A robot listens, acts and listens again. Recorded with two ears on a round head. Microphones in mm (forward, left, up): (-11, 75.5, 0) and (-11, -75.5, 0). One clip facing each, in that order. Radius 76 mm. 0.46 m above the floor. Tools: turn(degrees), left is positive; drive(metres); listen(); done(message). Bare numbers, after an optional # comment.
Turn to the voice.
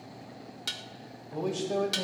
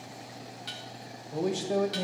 turn(-30)
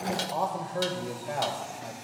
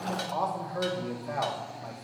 # So it is at 15° left.
turn(15)
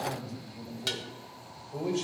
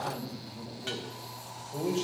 done("Facing the man speaking, 1 to 2 m away.")